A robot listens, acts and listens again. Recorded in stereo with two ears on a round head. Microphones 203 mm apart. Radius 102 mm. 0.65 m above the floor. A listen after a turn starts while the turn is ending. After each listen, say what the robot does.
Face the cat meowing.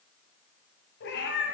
Turn 50° left.
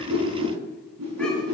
Keep listening.
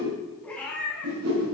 Turn 10° left.
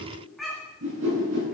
Facing the cat meowing.